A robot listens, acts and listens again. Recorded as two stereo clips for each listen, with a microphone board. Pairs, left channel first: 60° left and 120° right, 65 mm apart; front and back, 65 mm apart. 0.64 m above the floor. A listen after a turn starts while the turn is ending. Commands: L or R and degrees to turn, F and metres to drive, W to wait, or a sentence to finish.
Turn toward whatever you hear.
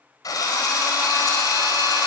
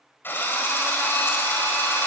L55
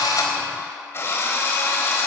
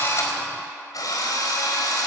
L10
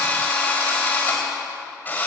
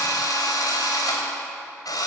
Found it: a drill, straight ahead, over 4 m away.